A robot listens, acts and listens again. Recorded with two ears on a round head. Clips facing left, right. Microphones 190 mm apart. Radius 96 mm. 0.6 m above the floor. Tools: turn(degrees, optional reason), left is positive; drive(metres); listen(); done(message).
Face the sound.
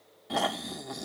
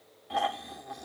turn(degrees=50, reason="The snoring: about 50° left or 130° left.")
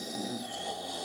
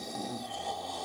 turn(degrees=20, reason="So it is at 20° left.")
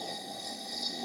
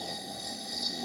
done("Found it: snoring, straight ahead.")